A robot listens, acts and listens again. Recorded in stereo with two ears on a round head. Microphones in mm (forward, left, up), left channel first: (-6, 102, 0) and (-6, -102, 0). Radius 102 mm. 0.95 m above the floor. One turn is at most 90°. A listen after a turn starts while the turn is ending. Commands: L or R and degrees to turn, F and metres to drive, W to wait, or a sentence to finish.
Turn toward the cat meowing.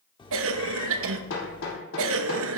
L20
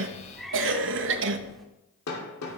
Found it: a cat meowing, straight ahead, under 1 m away.